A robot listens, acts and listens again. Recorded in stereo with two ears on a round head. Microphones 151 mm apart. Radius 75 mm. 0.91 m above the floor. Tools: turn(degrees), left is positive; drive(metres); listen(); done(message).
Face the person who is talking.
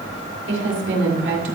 turn(degrees=-70)
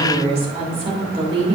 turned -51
turn(degrees=-35)
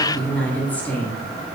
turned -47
turn(degrees=10)
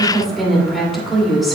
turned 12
done("Facing the woman speaking, 2 to 4 m away.")